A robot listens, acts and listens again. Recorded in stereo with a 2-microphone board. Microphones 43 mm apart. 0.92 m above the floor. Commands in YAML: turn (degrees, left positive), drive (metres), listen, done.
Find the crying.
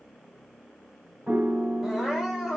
turn: -30
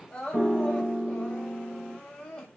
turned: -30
turn: 25
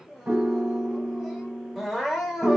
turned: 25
done: "Found it: crying, straight ahead."